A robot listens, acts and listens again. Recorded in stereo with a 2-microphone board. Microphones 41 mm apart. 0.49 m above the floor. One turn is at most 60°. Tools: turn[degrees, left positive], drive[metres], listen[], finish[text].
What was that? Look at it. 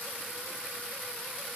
Action: listen[]
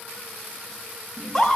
Action: turn[30]
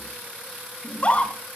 Thought: So it is at 145° left.
Action: turn[60]
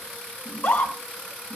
Thought: The scream is now 120° left.
Action: turn[60]
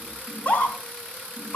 Thought: The scream is now 45° left.
Action: turn[45]
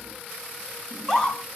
Thought: The scream is now 15° left.
Action: turn[15]
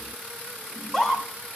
Action: finish[Facing the scream.]